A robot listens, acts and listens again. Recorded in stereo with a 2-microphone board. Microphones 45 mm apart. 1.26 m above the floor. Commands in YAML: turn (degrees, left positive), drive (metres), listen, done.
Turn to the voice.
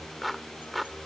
listen: true
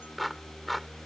listen: true
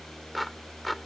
done: "I can't make out anyone speaking, only a clap."